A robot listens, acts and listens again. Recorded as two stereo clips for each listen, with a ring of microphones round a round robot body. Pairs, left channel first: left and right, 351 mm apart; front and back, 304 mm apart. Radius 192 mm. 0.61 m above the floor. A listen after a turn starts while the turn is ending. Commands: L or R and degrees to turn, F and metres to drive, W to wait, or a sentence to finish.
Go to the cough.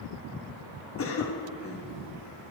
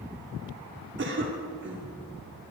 L135
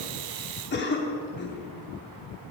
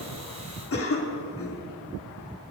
L35
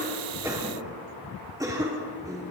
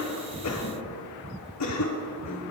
R10
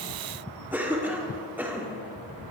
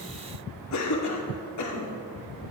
F1.0
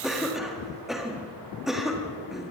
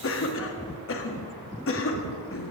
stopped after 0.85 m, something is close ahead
I am next to the cough.